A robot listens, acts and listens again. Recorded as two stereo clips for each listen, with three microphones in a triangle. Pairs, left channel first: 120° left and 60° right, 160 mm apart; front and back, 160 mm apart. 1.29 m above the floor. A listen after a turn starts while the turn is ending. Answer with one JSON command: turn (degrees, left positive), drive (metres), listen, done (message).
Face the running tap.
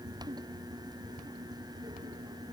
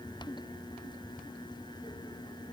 {"listen": true}
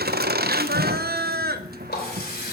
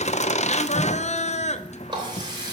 {"turn": 120}
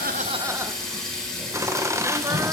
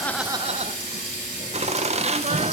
{"turn": 35}
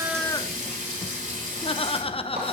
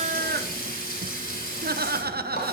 {"turn": -25}
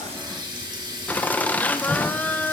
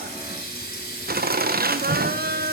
{"done": "Facing the running tap."}